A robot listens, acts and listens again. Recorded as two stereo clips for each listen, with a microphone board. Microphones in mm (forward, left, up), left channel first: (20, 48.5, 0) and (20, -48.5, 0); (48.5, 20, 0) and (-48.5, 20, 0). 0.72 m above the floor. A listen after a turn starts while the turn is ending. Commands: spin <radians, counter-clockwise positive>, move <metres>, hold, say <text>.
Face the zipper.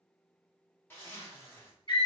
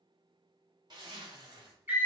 spin 2.62
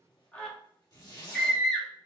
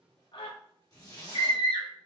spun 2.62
spin 0.79
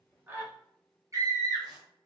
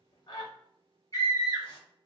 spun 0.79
hold
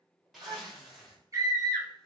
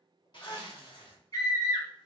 say Facing the zipper.